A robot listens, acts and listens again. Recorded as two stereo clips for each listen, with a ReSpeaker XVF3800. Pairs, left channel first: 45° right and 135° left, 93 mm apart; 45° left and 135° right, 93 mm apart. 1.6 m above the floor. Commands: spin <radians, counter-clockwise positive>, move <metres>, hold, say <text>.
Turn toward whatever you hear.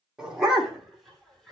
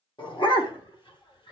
spin 0.87
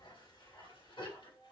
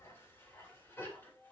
spin -0.35
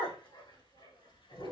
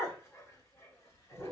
spin -0.26
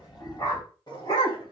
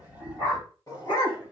say Found it: a dog barking, straight ahead.